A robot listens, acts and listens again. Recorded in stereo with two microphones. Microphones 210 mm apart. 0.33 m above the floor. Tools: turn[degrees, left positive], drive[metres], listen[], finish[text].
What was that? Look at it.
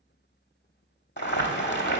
Thought: The boiling: about 55° left or 125° left.
Action: turn[55]
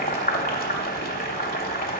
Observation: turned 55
Thought: So it is at 55° left.
Action: turn[55]
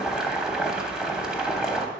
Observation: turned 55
Action: finish[Found it: boiling, straight ahead.]